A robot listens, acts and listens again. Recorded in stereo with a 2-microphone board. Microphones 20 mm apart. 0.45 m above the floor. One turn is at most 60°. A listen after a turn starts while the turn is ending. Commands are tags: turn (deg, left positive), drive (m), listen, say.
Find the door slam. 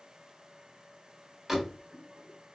<turn deg="-15"/>
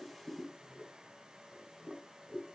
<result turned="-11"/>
<listen/>
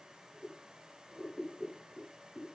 <say>I heard a door slam, but can't make it out now. It was about 5° right or 155° right.</say>